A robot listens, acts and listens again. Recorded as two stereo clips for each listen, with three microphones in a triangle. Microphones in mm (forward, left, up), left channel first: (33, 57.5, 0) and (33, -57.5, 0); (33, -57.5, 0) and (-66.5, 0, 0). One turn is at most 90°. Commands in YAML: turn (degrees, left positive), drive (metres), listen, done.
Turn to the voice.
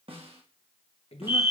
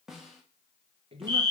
turn: 90
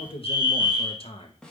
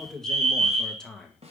turn: 55
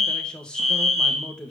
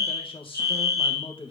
turn: 10
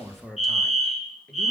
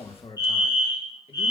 done: "Found it: a man speaking, straight ahead, 1 to 2 m away."